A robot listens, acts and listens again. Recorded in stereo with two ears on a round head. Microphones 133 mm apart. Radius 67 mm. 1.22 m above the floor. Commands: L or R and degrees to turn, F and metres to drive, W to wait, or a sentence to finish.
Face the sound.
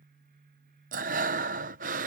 R60
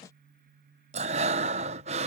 R50
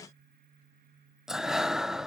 Found it: breathing, straight ahead.